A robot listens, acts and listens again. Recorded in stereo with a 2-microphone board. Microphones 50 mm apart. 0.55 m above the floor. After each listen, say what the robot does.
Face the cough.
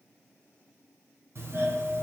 Keep listening.
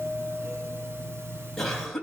Turn 30° left.
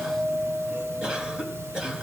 Turn 20° right.
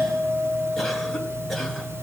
Keep listening.
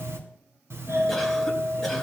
Keep listening.
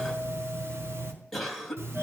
Found it: a cough, straight ahead.